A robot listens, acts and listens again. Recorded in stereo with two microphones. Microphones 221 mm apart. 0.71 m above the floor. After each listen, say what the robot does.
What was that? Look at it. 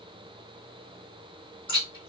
Turn 20° left.
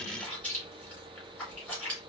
Facing the chewing, 2 to 4 m away.